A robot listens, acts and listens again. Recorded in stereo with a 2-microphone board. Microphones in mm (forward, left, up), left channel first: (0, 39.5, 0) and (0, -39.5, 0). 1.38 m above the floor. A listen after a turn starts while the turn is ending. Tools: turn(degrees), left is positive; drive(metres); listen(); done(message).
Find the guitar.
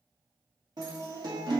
turn(degrees=-60)
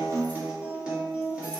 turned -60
turn(degrees=-15)
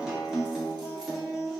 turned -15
done("Found it: a guitar, straight ahead.")